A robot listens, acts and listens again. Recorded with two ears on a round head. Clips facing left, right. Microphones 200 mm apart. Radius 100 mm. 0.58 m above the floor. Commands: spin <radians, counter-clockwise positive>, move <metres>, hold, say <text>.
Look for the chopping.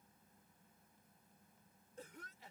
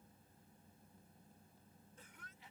hold
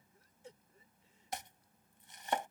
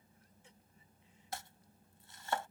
spin 0.35
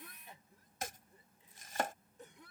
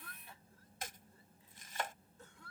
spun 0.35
spin 2.44
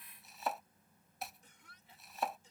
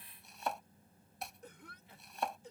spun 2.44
say Facing the chopping.